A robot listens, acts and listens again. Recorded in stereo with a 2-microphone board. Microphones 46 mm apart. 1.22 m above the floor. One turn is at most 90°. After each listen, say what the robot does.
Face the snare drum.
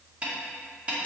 Turn 25° right.
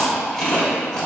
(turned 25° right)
Keep listening.
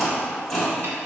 Keep listening.
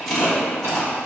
I heard a snare drum, but can't make it out now. It was about straight ahead or 130° right.